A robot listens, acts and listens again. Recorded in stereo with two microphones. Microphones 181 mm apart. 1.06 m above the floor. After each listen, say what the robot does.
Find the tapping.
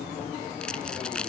Keep listening.
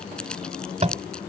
Turn 40° right.
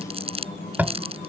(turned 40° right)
Turn 10° right.
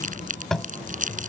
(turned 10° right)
Facing the tapping.